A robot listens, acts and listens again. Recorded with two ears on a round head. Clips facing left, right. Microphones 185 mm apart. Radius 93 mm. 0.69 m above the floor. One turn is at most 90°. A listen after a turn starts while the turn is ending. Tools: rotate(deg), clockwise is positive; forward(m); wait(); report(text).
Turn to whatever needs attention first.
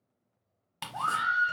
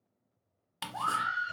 rotate(-45)
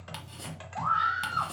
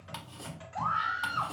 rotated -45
report("Facing the scream.")